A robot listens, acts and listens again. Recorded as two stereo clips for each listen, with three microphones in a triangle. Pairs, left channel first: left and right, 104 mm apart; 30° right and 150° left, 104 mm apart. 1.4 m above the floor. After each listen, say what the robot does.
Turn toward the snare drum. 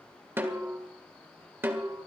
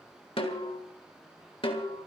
Turn 25° right.
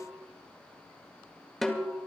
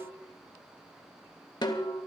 Found it: a snare drum, straight ahead.